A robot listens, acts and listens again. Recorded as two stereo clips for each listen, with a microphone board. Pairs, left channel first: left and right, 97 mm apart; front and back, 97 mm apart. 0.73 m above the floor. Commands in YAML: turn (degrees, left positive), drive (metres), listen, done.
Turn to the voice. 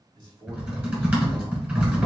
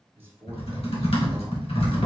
turn: -110
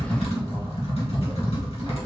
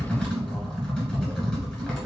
listen: true
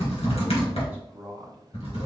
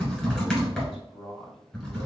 turn: -15
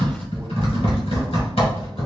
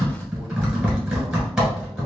listen: true
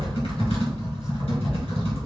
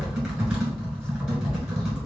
listen: true
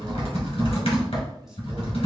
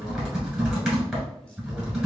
done: "Found it: a man speaking, straight ahead, 1 to 2 m away."